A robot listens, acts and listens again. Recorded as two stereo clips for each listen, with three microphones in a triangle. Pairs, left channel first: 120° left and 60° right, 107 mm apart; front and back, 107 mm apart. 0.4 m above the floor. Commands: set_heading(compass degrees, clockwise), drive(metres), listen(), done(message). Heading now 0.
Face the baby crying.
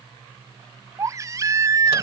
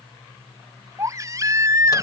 set_heading(120)
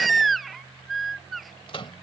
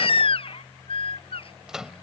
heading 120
set_heading(90)
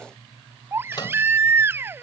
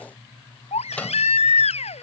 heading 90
set_heading(80)
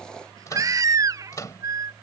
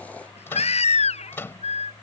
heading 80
done("Found it: a baby crying, straight ahead.")